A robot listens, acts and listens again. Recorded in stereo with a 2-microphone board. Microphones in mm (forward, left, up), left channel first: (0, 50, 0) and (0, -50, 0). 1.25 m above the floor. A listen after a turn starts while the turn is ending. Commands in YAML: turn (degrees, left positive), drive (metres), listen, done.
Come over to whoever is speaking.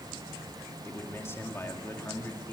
turn: 25
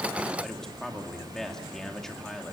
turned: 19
drive: 1.0
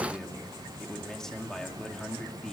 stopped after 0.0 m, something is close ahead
done: "Blocked. The man speaking is further on, straight ahead."